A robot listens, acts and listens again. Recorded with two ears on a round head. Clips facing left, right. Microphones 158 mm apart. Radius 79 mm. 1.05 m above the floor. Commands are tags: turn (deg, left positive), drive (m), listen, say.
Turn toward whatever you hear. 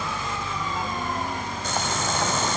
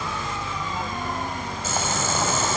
<turn deg="30"/>
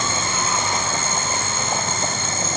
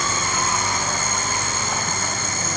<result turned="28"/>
<turn deg="155"/>
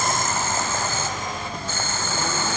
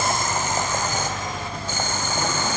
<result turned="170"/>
<turn deg="-15"/>
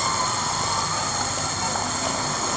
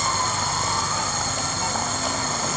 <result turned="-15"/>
<say>Found it: boiling, straight ahead, 2 to 4 m away.</say>